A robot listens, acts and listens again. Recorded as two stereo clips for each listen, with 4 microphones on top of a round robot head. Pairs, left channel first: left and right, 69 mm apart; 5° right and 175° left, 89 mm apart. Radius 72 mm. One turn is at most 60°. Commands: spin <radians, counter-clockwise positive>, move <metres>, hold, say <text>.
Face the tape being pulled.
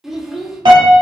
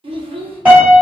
hold
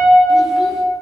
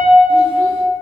hold
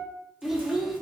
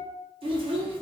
say I can't make out tape being pulled, only a piano and a child speaking.